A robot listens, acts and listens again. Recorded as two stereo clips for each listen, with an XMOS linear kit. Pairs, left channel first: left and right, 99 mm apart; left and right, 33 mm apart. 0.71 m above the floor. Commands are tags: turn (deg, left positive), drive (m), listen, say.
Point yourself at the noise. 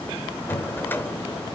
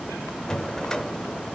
<turn deg="20"/>
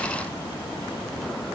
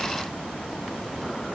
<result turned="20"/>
<listen/>
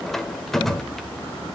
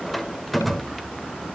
<say>Found it: a drawer, straight ahead.</say>